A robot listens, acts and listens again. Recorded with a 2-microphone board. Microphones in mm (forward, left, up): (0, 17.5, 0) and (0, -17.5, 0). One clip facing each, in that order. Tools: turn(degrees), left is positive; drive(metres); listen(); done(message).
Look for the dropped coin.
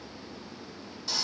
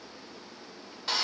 listen()
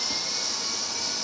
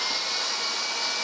listen()
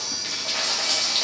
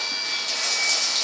turn(degrees=25)
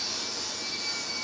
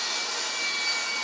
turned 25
listen()
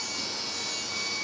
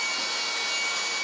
done("I heard a dropped coin, but can't make it out now. It was about straight ahead or 130° left.")